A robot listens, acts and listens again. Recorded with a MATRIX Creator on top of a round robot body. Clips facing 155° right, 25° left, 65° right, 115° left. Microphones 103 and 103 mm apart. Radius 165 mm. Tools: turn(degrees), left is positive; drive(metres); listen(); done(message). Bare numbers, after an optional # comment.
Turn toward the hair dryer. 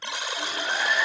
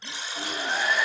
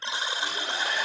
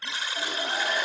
# The hair dryer: 110° left.
turn(110)
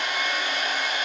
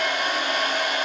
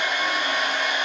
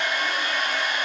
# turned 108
done("Facing the hair dryer, over 4 m away.")